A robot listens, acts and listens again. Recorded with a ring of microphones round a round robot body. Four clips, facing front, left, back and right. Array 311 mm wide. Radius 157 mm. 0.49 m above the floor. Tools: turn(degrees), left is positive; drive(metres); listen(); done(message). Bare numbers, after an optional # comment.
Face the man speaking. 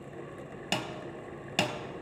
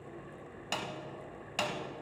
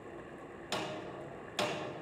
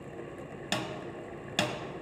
listen()
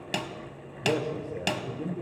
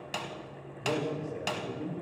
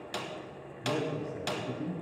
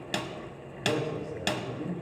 # The man speaking: 15° right.
turn(-15)
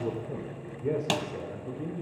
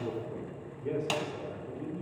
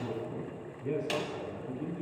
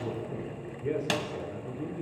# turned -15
# The man speaking is now 30° right.
turn(-30)
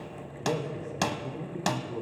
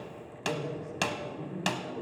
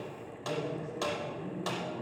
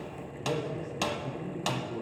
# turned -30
# The man speaking is now 10° right.
turn(-10)
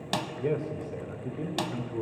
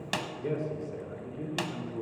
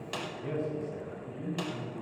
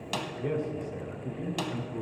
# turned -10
done("Found it: a man speaking, straight ahead.")